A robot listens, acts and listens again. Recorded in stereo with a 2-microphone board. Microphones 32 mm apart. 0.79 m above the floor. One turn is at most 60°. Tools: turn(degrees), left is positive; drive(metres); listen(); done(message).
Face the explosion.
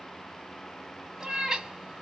listen()
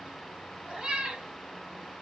listen()
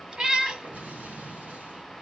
turn(degrees=-60)
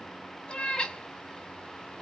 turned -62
listen()
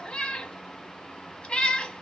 done("I heard an explosion, but can't make it out now. It was about straight ahead or 60° right.")